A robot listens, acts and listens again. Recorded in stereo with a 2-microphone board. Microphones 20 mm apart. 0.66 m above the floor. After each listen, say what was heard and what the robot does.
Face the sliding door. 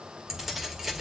Keep listening.
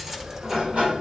Turn 90° right.
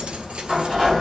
So it is at 10° right. Turn 10° right.
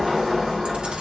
Found it: a sliding door, straight ahead.